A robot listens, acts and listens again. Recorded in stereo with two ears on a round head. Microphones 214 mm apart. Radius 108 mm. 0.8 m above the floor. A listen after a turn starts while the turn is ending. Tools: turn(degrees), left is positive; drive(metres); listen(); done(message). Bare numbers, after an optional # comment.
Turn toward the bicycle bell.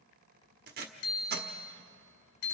# The bicycle bell: about 65° left or 115° left.
turn(65)
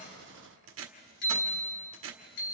# So it is at 45° left.
turn(45)
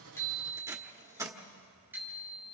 # The bicycle bell is now 10° right.
turn(-10)
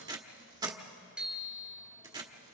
done("Found it: a bicycle bell, straight ahead, 2 to 4 m away.")